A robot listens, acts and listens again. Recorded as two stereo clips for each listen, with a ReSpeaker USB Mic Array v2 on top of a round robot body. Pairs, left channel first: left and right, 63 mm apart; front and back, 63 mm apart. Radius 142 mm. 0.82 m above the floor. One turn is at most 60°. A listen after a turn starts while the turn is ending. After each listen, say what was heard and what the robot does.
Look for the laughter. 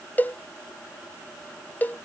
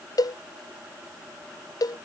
Keep listening.
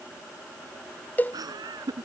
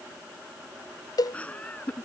The laughter: 70° right. Turn 60° right.
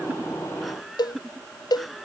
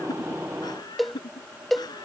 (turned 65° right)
Facing the laughter.